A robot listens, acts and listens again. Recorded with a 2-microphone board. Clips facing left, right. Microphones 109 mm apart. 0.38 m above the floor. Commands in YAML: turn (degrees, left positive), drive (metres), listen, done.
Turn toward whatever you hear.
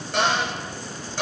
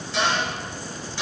turn: 55
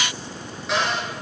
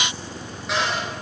done: "Found it: a cupboard door, straight ahead."